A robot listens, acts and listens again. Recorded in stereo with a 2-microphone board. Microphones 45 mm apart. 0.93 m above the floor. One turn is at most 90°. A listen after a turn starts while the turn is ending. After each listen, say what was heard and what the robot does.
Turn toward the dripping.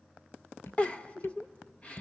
Turn 90° left.
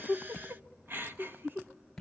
So it is at 10° left. Turn 10° left.
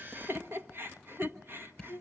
Facing the dripping, 2 to 4 m away.